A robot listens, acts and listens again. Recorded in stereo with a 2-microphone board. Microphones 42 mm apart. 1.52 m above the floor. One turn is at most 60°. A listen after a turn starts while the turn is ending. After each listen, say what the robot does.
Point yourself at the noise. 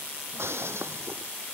Turn 60° right.
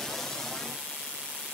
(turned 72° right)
Keep listening.
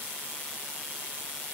I heard breaking glass, but can't make it out now. It was about straight ahead or 40° right.